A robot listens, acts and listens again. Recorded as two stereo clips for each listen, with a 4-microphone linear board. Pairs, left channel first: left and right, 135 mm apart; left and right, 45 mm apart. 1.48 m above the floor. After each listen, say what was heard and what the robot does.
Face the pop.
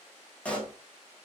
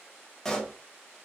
Turn 30° left.
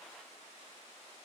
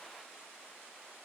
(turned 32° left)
Keep listening.
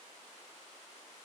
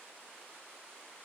I heard a pop, but can't make it out now. It was about 25° right or 140° left.